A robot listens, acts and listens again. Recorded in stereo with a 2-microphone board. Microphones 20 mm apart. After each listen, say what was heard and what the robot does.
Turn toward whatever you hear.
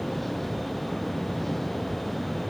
Keep listening.
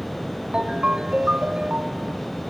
The ringtone: about 70° right or 110° right. Turn 70° right.
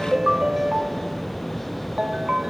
So it is at 35° right. Turn 35° right.
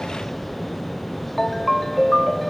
Facing the ringtone.